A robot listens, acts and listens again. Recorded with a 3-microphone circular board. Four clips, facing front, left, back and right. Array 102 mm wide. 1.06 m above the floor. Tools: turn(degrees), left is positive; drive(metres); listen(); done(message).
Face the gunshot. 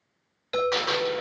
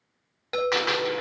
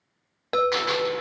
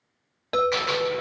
turn(degrees=95)
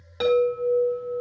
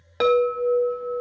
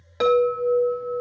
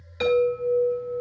done("I heard a gunshot from this way, but can't make it out now.")